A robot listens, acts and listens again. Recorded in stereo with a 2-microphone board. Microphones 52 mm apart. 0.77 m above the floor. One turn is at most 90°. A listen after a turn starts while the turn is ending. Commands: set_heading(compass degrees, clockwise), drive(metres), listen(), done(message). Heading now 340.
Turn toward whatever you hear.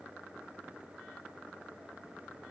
listen()
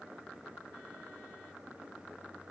listen()
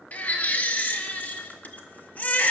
set_heading(310)
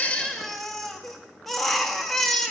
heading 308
done("Found it: a baby crying, straight ahead, under 1 m away.")